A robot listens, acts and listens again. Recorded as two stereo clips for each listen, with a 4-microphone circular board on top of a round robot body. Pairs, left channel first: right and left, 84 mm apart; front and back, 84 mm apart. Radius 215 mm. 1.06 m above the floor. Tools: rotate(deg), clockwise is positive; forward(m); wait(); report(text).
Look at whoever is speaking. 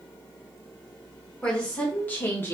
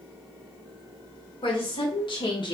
rotate(25)
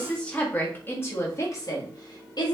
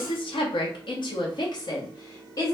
rotate(50)
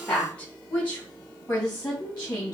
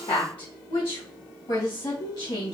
rotate(25)
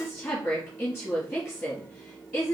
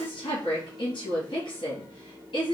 report("Facing the woman speaking, 1 to 2 m away.")